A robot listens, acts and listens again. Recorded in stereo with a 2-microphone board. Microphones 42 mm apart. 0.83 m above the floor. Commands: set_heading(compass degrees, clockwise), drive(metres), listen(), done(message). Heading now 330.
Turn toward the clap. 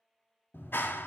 set_heading(270)
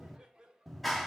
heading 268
done("Found it: a clap, straight ahead.")